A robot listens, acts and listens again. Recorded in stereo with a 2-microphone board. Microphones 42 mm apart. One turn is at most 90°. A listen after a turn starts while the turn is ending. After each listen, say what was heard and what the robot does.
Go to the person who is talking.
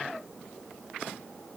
Keep listening.
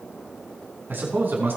The man speaking: about 50° right or 130° right. Turn 50° right.
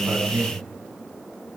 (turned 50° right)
So it is at 80° right. Turn 80° right.
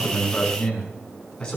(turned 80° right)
The man speaking is now 15° left. Turn 15° left.
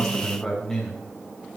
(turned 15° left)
Drive 1.0 m forward.
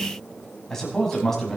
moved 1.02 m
Drive 1.0 m forward.
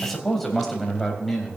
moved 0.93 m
Drive 1.0 m forward.
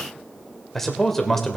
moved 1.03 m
Drive 1.0 m forward.
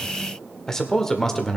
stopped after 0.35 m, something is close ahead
The man speaking is now 10° left. Turn 10° left.
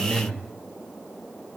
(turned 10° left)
I am next to the man speaking.